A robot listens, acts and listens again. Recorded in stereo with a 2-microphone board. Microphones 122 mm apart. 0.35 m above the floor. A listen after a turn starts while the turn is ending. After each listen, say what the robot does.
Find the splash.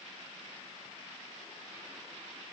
Keep listening.
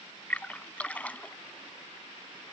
Turn 30° left.
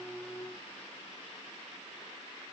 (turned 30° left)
Keep listening.
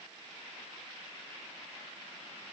I heard a splash, but can't make it out now. It was about 20° right or 140° left.